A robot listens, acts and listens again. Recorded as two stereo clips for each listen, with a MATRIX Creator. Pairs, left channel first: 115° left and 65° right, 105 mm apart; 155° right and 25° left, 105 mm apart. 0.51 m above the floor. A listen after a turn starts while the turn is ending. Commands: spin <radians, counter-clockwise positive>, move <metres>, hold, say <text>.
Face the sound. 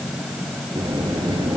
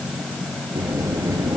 spin -0.52
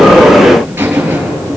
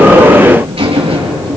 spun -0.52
say Found it: a buzzer, straight ahead, over 4 m away.